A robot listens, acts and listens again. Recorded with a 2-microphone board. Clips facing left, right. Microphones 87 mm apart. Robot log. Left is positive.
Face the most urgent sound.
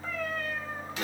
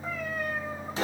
cmd idle
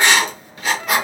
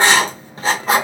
cmd idle
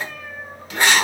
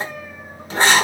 end: I can't make out anything urgent, only a cat meowing and writing.